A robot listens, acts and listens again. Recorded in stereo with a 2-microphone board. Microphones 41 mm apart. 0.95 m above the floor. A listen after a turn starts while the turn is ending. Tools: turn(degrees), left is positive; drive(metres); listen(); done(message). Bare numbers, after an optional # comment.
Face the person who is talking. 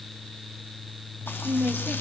# The woman speaking: about 35° right or 145° right.
turn(-35)
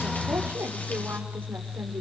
listen()
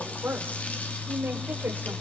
# So it is at 125° right.
turn(-125)
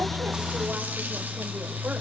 listen()
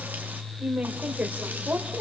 # The woman speaking is now 35° right.
turn(-35)
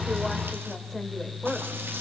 # The woman speaking is now 10° left.
turn(10)
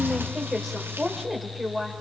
done("Found it: a woman speaking, straight ahead, over 4 m away.")